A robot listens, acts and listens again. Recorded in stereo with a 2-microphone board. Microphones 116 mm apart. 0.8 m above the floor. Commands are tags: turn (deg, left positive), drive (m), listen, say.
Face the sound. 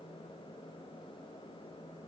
<listen/>
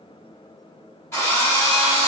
<turn deg="25"/>
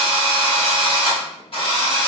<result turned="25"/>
<turn deg="130"/>
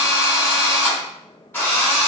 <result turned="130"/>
<turn deg="20"/>
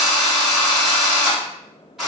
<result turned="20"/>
<say>Facing the drill.</say>